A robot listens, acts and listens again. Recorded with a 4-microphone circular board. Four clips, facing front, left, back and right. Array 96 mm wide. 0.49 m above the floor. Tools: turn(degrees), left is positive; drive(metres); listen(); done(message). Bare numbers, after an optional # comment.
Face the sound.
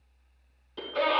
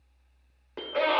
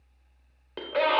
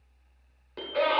# The scream: 155° left.
turn(155)
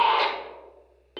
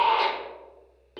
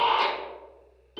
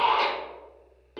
done("Facing the scream, 1 to 2 m away.")